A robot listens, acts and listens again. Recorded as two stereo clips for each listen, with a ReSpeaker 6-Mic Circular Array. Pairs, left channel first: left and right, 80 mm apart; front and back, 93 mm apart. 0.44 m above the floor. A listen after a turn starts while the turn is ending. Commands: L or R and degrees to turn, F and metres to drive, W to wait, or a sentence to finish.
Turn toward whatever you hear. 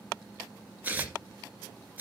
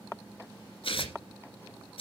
R20
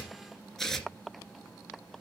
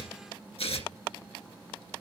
Found it: tearing paper, straight ahead.